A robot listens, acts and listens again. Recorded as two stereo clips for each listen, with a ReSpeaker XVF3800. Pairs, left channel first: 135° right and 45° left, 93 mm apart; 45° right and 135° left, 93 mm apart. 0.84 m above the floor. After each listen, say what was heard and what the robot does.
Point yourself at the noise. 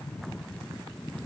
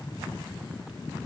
Keep listening.
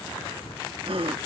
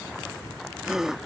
The gasp: 50° left. Turn 50° left.
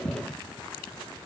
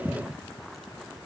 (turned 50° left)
Facing where the gasp came from. I can't hear it now.